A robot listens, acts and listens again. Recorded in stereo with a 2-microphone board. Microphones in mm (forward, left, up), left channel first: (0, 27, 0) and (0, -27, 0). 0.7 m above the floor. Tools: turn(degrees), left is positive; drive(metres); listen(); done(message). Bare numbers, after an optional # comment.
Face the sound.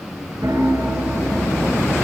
turn(-90)
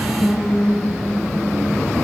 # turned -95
done("Found it: a piano, straight ahead.")